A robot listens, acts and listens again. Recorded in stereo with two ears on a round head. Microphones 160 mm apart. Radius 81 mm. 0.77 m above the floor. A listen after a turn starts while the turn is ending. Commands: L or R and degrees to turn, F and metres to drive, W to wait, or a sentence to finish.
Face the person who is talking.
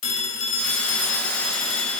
W
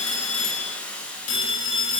W
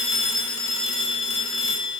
I can't make out anyone speaking, only a phone ringing and a hiss.